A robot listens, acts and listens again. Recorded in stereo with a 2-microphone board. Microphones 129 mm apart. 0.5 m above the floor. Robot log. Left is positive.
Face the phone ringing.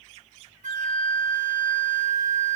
cmd idle
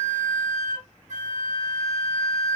cmd idle
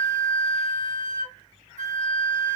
end: I can't make out a phone ringing to turn to.